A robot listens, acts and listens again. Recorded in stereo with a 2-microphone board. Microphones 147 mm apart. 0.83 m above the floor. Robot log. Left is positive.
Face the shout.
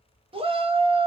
note: The shout: about 40° right or 140° right.
cmd yaw -40
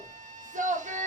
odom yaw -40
note: So it is at 90° right.
cmd yaw -90
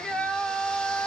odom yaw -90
end: Facing the shout, under 1 m away.